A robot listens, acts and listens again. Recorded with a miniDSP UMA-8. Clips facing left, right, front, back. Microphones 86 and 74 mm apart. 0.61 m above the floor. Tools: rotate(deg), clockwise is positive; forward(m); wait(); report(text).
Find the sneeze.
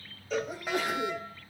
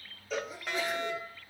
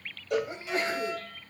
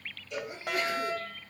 rotate(-55)
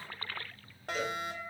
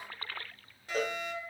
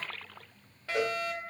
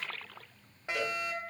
report("Facing where the sneeze came from. I can't hear it now.")